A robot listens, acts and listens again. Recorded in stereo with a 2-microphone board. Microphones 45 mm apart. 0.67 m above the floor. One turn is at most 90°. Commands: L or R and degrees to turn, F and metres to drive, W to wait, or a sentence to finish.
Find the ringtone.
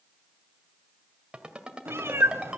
R20
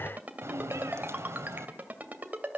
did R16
R90
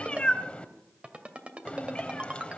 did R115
R25
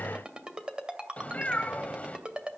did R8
R20
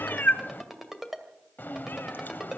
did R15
Facing the ringtone.